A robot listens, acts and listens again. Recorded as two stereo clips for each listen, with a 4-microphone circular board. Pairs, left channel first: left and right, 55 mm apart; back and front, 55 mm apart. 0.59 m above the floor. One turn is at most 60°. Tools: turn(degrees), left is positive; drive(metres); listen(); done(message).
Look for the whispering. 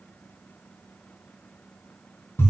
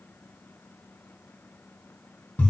listen()
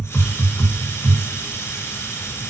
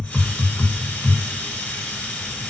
listen()
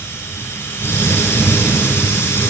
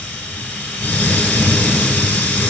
done("I can't make out whispering, only a hiss.")